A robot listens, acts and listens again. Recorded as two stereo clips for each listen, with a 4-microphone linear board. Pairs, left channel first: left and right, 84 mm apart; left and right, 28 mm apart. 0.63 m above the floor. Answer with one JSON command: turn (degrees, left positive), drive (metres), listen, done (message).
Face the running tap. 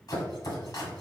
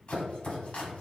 {"listen": true}
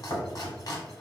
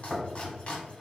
{"listen": true}
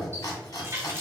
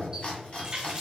{"turn": -35}
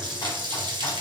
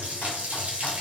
{"turn": -110}
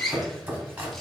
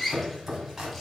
{"done": "Facing the running tap."}